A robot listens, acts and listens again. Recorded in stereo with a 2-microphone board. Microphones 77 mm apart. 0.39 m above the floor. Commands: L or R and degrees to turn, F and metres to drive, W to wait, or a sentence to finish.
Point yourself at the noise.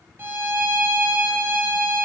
R30
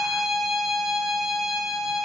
Facing the violin.